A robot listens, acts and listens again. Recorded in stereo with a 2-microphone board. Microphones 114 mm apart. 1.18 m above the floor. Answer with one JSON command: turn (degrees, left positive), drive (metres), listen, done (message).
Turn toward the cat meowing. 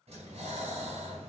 {"listen": true}
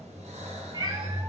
{"turn": -40}
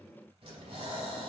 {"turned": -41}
{"listen": true}
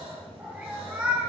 {"done": "Facing the cat meowing."}